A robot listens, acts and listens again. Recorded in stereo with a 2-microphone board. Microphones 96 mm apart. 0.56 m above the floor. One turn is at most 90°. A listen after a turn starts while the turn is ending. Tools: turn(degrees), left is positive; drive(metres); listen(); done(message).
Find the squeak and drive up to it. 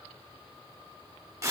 listen()
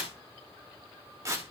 listen()
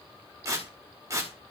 done("I can't make out a squeak, only tearing paper.")